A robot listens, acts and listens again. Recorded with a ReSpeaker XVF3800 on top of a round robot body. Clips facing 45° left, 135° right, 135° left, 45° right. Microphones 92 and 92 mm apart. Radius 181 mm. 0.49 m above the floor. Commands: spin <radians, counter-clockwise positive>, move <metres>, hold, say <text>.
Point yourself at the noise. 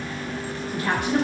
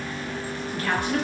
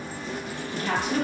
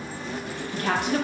spin -0.44
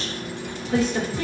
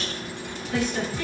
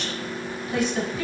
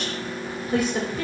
say Facing the woman speaking.